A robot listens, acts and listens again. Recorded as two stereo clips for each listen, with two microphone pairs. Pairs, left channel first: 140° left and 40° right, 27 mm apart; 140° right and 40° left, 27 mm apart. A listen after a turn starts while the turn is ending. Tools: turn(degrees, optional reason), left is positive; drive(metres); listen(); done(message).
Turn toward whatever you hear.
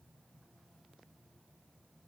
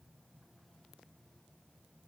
listen()
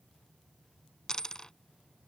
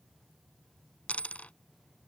turn(degrees=-160, reason="The dropped coin: 160° right.")
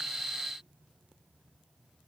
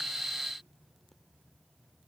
done("I heard a dropped coin from this way, but can't make it out now.")